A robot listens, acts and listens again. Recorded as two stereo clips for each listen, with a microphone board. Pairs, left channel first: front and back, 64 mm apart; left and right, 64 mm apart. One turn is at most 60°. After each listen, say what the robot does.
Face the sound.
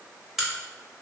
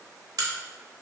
Turn 60° right.
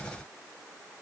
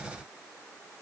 Turn 35° right.
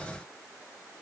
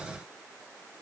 Facing where the crack came from. I can't hear it now.